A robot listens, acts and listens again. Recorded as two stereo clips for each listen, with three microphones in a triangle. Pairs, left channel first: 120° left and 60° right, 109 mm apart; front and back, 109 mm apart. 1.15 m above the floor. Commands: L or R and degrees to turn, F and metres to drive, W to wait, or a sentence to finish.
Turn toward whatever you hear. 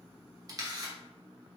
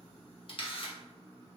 R10
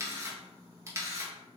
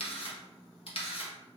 Found it: a camera shutter, straight ahead.